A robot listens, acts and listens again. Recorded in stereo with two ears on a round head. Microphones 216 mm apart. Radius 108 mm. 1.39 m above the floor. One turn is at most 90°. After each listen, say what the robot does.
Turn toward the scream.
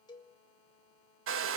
Keep listening.
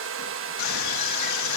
Turn 90° left.
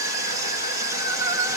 Turn 15° right.
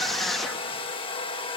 Found it: a scream, straight ahead.